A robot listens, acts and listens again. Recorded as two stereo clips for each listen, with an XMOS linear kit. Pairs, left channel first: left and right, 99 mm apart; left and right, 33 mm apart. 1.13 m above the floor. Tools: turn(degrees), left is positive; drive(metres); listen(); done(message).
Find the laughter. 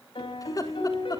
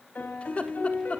turn(degrees=40)
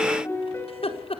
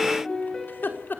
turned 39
turn(degrees=100)
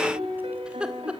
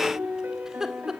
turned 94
turn(degrees=-10)
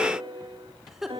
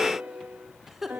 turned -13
done("Facing the laughter.")